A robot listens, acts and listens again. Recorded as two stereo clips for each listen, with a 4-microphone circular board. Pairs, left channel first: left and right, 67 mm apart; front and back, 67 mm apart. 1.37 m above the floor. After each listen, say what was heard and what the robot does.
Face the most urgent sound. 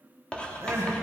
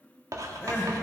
The crying: 50° right. Turn 50° right.
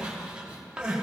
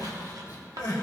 The crying is now 15° right. Turn 15° right.
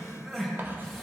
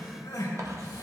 Found it: crying, straight ahead.